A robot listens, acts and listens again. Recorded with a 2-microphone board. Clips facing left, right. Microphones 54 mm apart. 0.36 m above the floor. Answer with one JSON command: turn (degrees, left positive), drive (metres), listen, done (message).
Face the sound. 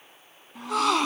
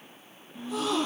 {"turn": 90}
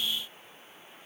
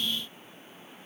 {"done": "I heard a gasp from this way, but can't make it out now."}